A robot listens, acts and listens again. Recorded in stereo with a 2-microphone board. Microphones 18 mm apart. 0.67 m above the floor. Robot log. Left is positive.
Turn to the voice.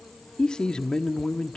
note: The man speaking: about 55° left or 125° left.
cmd yaw +55
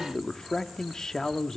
note: So it is at 50° left.
cmd yaw +50
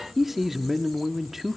note: The man speaking is now 20° right.
cmd yaw -20
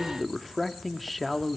end: Found it: a man speaking, straight ahead, 1 to 2 m away.